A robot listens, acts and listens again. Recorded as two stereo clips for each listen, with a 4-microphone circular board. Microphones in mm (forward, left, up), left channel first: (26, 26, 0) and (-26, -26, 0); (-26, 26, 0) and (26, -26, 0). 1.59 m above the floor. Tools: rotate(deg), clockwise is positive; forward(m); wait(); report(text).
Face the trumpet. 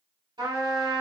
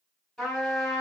rotate(135)
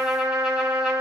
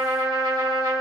rotate(55)
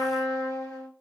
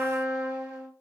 rotate(-20)
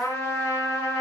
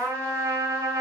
report("Facing the trumpet.")